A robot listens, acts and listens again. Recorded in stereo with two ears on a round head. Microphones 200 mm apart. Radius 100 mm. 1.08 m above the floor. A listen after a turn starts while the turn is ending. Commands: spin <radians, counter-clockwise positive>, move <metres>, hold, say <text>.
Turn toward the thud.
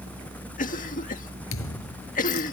spin 1.31
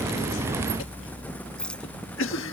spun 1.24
hold
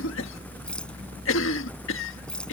say I heard a thud, but can't make it out now. It was about straight ahead or 35° left.